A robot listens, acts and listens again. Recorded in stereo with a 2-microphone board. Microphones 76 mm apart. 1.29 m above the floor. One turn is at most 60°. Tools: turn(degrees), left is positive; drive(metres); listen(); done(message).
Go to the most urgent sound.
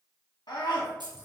turn(degrees=60)
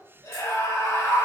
turn(degrees=45)
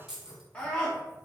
turn(degrees=20)
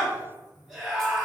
drive(metres=1.0)
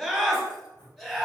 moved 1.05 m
drive(metres=1.0)
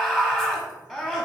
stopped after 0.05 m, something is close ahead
turn(degrees=10)
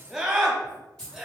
done("Arrived at the scream, straight ahead.")